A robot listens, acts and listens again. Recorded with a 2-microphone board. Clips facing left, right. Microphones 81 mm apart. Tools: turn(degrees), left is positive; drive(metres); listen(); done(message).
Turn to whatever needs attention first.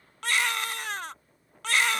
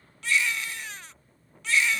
turn(degrees=70)
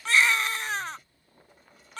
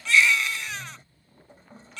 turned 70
turn(degrees=40)
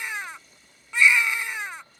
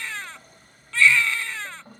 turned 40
turn(degrees=15)
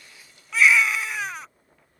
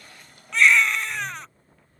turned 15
done("Found it: a baby crying, straight ahead.")